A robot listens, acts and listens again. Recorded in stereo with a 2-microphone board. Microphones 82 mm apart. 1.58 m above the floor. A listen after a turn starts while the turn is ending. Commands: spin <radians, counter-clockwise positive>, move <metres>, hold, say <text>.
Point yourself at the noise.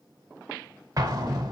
spin -0.79
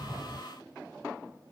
say Found it: an explosion, straight ahead.